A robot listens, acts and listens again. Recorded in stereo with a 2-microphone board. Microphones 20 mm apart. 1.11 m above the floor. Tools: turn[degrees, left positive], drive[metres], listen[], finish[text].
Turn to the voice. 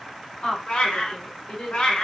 Thought: The woman speaking: about 40° left or 140° left.
Action: turn[40]
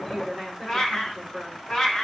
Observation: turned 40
Action: finish[Found it: a woman speaking, straight ahead.]